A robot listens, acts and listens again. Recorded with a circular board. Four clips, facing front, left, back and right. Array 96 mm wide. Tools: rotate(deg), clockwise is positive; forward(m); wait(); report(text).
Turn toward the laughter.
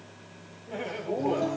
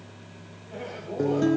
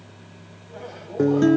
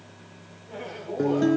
report("Facing the laughter.")